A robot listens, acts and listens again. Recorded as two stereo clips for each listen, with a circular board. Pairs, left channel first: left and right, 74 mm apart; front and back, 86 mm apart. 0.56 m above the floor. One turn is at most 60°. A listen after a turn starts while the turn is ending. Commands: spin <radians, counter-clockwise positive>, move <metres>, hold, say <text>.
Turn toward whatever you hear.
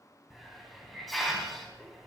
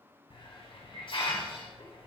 say Facing the hiss.